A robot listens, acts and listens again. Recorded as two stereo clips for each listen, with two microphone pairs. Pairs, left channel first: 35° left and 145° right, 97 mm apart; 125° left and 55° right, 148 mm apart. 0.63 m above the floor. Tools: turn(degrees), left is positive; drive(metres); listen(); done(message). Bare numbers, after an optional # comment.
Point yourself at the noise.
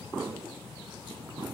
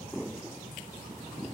listen()
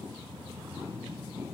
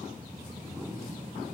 listen()
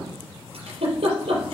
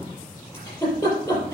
# The giggle: 160° right.
turn(-160)
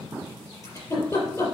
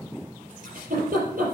# The giggle is now 20° right.
turn(-20)
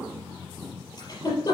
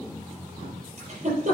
# The giggle is now 10° right.
turn(-10)
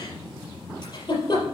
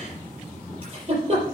done("Facing the giggle.")